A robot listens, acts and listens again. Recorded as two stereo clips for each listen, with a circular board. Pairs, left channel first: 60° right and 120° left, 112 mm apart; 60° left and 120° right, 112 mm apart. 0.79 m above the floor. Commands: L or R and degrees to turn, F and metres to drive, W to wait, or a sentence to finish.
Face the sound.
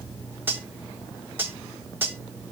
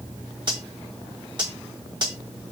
R170
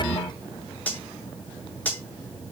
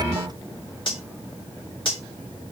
L15
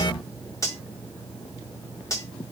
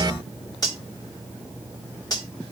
Found it: cutlery clinking, straight ahead.